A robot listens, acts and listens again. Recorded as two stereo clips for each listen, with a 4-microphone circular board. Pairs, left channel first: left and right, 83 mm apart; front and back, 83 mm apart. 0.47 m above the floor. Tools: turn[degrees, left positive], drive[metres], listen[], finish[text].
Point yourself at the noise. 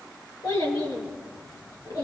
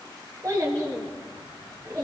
Thought: The child speaking: 130° left.
Action: turn[130]
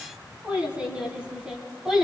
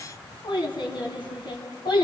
Action: finish[Facing the child speaking, 2 to 4 m away.]